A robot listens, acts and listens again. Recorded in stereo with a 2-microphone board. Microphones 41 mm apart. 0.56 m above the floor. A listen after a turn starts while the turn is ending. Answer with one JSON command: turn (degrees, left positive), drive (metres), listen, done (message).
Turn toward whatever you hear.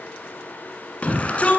{"turn": 35}
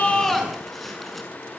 {"done": "Found it: a shout, straight ahead, over 4 m away."}